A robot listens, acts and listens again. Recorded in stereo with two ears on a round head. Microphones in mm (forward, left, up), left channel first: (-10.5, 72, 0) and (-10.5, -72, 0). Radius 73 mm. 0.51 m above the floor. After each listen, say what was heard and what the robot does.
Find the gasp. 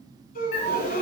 The gasp: about 55° left or 125° left. Turn 55° left.
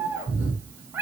Keep listening.
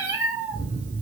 I heard a gasp, but can't make it out now. It was about straight ahead or 70° left.